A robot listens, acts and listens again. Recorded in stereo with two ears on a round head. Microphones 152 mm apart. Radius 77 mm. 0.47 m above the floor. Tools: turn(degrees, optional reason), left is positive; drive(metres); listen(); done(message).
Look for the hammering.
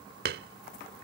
turn(degrees=-55, reason="The hammering: about 55° right or 125° right.")
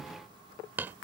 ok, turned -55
turn(degrees=-15, reason="So it is at 15° right.")
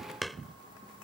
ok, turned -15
done("Found it: hammering, straight ahead.")